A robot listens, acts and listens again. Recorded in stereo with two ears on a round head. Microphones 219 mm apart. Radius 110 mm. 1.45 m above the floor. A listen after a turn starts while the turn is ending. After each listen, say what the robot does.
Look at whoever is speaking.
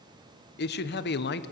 Turn 45° left.
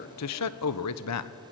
Turn 90° left.
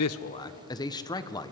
Turn 15° left.
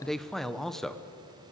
Found it: a man speaking, straight ahead, 1 to 2 m away.